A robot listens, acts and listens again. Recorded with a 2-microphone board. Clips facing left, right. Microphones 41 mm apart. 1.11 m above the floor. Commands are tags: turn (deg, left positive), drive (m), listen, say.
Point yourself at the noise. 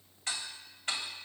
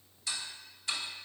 <turn deg="45"/>
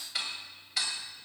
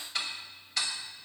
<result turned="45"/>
<say>Found it: ticking, straight ahead, 2 to 4 m away.</say>